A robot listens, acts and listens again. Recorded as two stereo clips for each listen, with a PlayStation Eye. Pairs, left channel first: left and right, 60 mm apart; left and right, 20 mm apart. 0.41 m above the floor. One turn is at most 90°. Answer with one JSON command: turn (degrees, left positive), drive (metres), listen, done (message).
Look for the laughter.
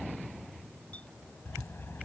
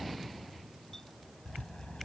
{"listen": true}
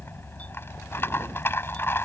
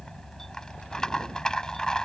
{"listen": true}
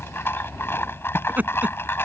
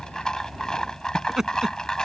{"turn": -30}
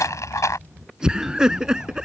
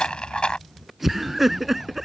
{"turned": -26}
{"turn": -15}
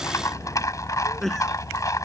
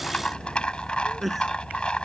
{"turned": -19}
{"done": "Found it: laughter, straight ahead."}